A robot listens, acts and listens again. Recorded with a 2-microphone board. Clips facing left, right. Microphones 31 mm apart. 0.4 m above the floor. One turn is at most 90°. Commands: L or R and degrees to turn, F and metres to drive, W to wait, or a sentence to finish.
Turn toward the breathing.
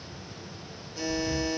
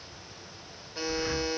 R65
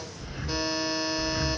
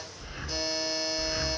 R10
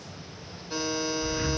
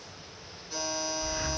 Facing the breathing.